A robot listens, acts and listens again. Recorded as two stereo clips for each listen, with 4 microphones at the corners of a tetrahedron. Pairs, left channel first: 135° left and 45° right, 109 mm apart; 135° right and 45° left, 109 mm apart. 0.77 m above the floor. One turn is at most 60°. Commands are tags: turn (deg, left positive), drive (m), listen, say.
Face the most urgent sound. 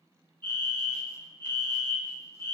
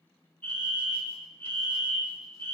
<turn deg="-60"/>
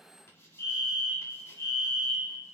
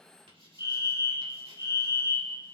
<turn deg="-10"/>
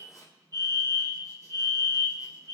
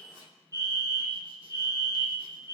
<say>Facing the fire alarm, 2 to 4 m away.</say>